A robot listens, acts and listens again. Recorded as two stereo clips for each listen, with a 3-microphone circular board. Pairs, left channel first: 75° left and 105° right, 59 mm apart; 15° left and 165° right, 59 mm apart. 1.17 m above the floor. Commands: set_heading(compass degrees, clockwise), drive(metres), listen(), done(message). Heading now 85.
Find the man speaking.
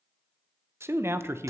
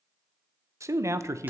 set_heading(225)
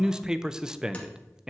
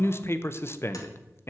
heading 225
set_heading(250)
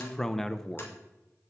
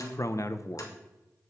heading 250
done("Facing the man speaking.")